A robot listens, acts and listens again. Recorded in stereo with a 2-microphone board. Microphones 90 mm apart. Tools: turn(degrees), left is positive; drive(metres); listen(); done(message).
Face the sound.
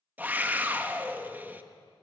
turn(degrees=-20)
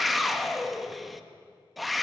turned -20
done("Found it: a scream, straight ahead.")